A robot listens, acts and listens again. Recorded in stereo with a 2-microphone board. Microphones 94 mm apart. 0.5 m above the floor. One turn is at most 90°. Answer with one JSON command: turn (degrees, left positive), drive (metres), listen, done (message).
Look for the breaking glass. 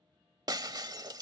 {"turn": -45}
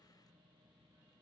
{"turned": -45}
{"listen": true}
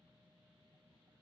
{"done": "I heard breaking glass, but can't make it out now. It was about straight ahead or 90° right."}